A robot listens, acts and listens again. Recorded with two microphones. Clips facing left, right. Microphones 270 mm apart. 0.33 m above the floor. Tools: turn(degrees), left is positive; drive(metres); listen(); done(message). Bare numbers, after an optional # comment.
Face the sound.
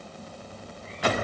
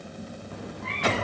turn(-90)
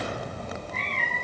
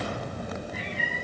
# So it is at 10° right.
turn(-10)
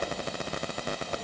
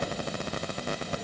listen()
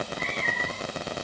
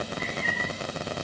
listen()
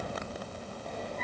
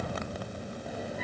done("Facing the cat meowing.")